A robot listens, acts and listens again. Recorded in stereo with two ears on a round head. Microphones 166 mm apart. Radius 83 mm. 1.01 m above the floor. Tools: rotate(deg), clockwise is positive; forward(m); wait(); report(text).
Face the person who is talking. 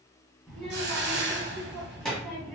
rotate(-30)
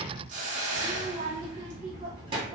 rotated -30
rotate(25)
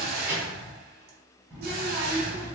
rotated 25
rotate(10)
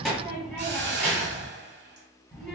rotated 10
report("Found it: a child speaking, straight ahead.")